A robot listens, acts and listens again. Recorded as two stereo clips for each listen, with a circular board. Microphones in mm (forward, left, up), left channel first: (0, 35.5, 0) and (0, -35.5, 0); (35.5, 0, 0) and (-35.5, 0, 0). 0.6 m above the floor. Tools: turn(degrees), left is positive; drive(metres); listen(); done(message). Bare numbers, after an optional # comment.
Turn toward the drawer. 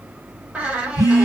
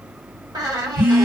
listen()
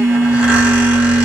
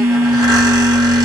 listen()
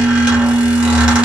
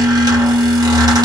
done("I can't make out a drawer, only a squeak and a phone buzzing.")